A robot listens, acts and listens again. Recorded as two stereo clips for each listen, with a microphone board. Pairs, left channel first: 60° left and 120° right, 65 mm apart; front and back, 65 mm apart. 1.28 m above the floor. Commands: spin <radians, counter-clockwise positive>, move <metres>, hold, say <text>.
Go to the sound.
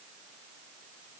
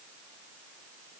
hold
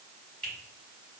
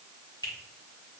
spin -0.17
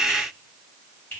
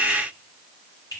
move 1.0
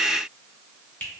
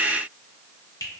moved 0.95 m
move 1.0
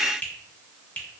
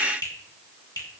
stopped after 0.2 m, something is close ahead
say I am next to the finger snap.